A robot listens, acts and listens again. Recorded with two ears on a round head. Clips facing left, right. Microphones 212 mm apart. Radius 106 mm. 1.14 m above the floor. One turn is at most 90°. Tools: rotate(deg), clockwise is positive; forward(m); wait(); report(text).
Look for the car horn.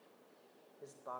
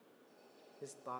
wait()
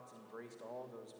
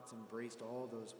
wait()
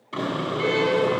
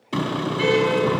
rotate(65)
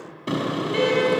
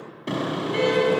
report("Found it: a car horn, straight ahead, over 4 m away.")